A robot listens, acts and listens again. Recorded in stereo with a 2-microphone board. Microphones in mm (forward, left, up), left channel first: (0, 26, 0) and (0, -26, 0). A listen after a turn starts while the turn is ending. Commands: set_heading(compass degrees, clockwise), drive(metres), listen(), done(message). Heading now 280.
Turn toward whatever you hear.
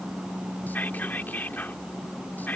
set_heading(240)
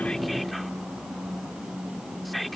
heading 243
done("Facing the whispering.")